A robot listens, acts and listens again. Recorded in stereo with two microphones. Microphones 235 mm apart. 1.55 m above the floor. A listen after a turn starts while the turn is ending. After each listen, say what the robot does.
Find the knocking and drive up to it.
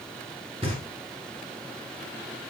Turn 25° right.
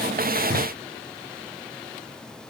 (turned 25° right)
Turn 125° right.
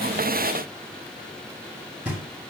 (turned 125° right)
Drive 1.0 m forward.
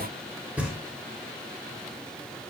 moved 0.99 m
Drive 1.0 m forward.
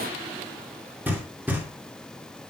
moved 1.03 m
Turn 10° right.
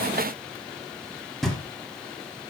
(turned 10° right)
Drive 1.0 m forward.
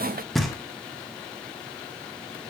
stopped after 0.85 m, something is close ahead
I am next to the knocking.